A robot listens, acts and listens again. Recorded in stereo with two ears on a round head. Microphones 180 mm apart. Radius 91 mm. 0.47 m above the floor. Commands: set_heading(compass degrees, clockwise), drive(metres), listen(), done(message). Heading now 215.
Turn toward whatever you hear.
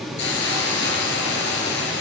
set_heading(155)
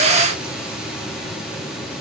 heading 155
listen()
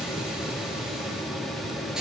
listen()
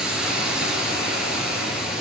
done("Facing the hiss.")